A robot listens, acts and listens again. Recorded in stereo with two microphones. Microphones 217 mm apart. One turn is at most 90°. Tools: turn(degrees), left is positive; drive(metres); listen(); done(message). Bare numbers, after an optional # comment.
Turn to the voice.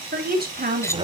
# The woman speaking: about 45° right or 135° right.
turn(-45)
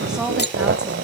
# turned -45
done("Facing the woman speaking.")